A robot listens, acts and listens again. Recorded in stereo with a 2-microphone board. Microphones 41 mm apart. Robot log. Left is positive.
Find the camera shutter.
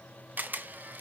note: The camera shutter: about 45° right or 135° right.
cmd yaw -45
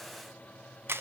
note: So it is at 85° right.
cmd yaw -85
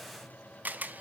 note: The camera shutter is now 45° right.
cmd yaw -45
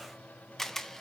note: The camera shutter is now 10° left.
cmd yaw +10
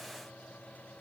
cmd idle
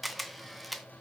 end: Facing the camera shutter, under 1 m away.